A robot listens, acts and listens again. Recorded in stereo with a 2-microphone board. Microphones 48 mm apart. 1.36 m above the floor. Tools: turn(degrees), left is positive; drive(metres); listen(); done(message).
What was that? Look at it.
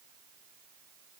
listen()
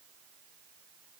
listen()
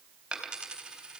turn(degrees=-15)
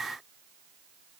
listen()
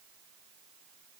done("I heard a dropped coin, but can't make it out now. It was about straight ahead or 150° right.")